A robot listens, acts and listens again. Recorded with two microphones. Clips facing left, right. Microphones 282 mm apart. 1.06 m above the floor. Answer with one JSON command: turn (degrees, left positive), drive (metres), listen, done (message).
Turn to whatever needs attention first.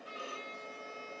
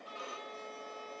{"listen": true}
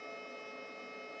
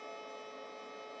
{"listen": true}
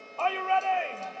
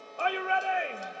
{"turn": -15}
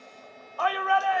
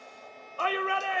{"turn": -150}
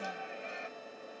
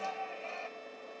{"turn": 20}
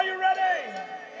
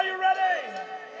{"done": "Facing the shout."}